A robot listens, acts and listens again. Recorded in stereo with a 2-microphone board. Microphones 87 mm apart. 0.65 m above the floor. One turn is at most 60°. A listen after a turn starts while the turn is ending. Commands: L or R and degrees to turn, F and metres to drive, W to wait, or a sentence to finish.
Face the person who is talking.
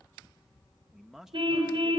R30
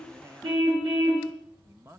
R60
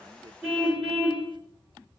R60
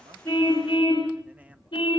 R25
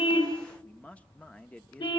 L15
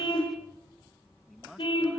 W
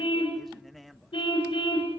Facing the man speaking.